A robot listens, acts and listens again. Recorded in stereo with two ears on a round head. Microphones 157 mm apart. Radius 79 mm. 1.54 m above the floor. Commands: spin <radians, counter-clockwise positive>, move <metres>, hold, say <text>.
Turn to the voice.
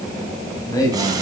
spin 0.35
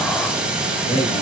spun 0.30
spin 0.70
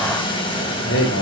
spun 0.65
spin 1.75
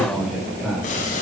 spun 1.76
say Facing the man speaking.